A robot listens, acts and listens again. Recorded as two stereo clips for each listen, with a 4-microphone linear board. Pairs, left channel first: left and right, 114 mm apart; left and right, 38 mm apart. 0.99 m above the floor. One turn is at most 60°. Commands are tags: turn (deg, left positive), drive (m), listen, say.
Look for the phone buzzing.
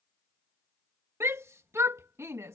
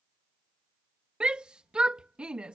<listen/>
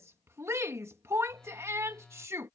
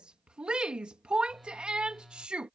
<turn deg="30"/>
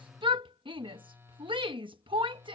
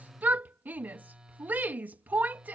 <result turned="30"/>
<turn deg="-20"/>
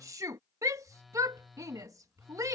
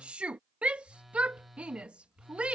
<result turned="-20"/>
<say>Facing the phone buzzing.</say>